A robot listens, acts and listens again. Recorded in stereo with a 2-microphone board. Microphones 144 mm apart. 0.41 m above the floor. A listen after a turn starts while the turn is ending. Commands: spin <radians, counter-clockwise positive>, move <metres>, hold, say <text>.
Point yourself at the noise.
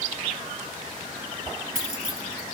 spin -1.31
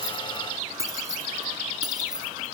spin -0.52
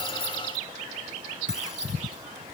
hold
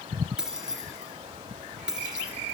say Found it: keys jangling, straight ahead.